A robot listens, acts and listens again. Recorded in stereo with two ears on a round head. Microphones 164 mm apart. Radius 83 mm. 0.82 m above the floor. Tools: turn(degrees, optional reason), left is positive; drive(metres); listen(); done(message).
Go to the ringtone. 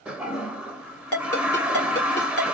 turn(degrees=30)
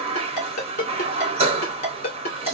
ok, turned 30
turn(degrees=135, reason="So it is at 135° left.")
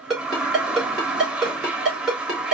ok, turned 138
drive(metres=1.0)
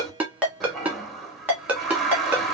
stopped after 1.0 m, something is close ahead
turn(degrees=-10, reason="The ringtone is now 10° right.")
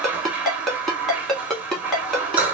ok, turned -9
done("I am next to the ringtone.")